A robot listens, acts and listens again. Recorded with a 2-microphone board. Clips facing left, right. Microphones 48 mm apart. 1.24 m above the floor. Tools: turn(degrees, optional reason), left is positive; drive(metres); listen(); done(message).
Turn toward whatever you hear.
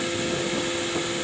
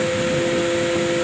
listen()
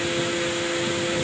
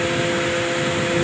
listen()
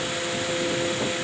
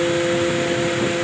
done("I can't make out anything.")